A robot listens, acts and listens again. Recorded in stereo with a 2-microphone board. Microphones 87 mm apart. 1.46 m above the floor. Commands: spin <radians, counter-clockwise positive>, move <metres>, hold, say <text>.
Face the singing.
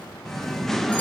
spin 0.52
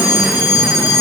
hold
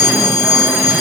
hold
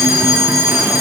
say I heard singing, but can't make it out now. It was about 25° right or 145° left.